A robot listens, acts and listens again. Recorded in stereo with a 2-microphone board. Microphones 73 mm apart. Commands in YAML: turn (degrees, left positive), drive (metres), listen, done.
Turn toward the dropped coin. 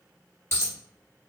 turn: 35
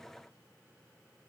listen: true
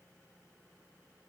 done: "I heard a dropped coin, but can't make it out now. It was about straight ahead or 110° left."